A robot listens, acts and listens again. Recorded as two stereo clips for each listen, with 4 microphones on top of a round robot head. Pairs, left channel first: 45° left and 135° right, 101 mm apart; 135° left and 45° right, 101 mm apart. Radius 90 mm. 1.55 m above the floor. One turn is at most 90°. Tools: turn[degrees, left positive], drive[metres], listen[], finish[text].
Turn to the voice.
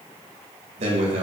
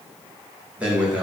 Thought: The man speaking: 125° right.
Action: turn[-90]
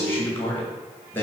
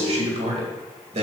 Thought: The man speaking is now 25° right.
Action: turn[-25]
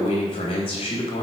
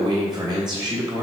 Action: finish[Found it: a man speaking, straight ahead.]